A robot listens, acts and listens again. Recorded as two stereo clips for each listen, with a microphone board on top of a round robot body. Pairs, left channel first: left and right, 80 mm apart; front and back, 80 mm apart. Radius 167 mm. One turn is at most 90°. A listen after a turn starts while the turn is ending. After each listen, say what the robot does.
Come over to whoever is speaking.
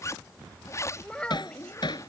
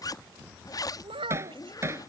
Turn 90° left.
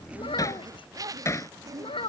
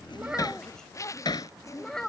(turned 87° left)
Turn 85° left.
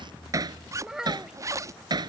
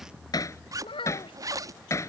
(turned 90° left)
Drive 1.0 m forward.
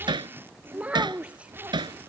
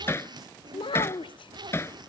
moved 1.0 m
Turn 15° right.
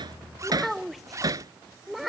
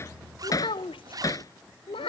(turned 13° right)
Drive 1.0 m forward.
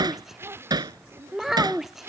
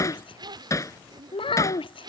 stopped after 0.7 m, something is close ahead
Arrived at the child speaking, straight ahead.